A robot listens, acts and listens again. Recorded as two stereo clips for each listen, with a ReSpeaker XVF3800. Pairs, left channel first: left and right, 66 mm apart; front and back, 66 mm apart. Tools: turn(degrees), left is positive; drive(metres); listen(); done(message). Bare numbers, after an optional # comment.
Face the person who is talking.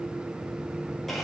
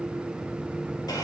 listen()
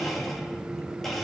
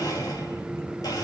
listen()
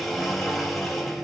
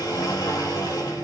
done("I can't make out anyone speaking, only a blender.")